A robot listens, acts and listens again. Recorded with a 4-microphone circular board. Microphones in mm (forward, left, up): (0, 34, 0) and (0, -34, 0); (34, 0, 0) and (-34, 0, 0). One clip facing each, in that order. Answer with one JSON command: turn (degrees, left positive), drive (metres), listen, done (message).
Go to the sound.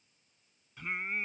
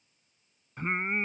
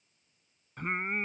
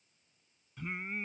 {"turn": -40}
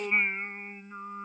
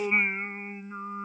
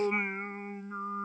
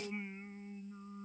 {"turn": -15}
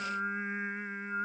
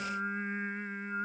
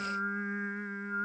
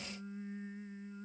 {"drive": 1.0}
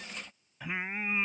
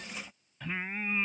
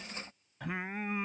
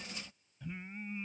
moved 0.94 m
{"turn": 10}
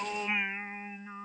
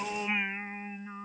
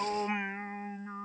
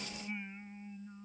{"drive": 1.0}
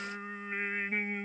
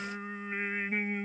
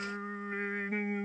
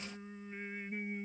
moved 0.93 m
{"drive": 1.0}
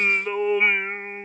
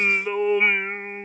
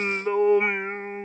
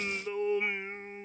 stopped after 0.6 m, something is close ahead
{"done": "I am next to the singing."}